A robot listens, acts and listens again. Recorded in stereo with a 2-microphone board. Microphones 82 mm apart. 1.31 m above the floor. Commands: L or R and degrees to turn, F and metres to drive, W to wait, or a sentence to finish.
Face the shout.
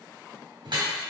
W
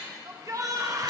R45
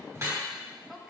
W
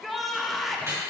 Facing the shout, under 1 m away.